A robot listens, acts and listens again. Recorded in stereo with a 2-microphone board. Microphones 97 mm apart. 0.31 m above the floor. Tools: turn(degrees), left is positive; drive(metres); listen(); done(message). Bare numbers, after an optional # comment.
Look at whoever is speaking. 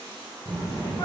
# The child speaking: about 40° right or 140° right.
turn(-40)
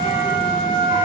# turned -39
listen()
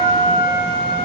done("Found it: a child speaking, straight ahead, 1 to 2 m away.")